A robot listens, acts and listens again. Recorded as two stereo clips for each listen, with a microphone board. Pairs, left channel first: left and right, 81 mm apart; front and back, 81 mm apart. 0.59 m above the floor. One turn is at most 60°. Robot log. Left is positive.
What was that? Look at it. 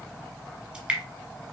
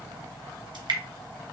note: The dripping: 165° right.
cmd yaw -60
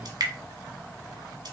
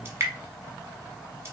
note: The dripping is now 125° right.
cmd yaw -60
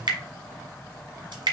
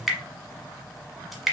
note: The dripping is now 90° right.
cmd yaw -60
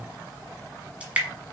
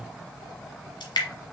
note: The dripping is now 15° right.
cmd yaw -15
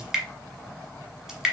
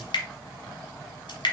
end: Found it: dripping, straight ahead, 1 to 2 m away.